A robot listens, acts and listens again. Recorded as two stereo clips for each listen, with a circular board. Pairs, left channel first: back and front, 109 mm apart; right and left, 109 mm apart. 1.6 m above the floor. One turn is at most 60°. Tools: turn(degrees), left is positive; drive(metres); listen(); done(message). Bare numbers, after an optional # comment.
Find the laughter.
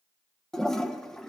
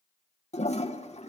listen()
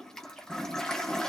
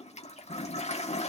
listen()
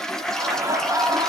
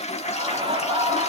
# The laughter: 60° left.
turn(60)
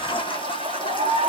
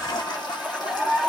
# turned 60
done("Facing the laughter.")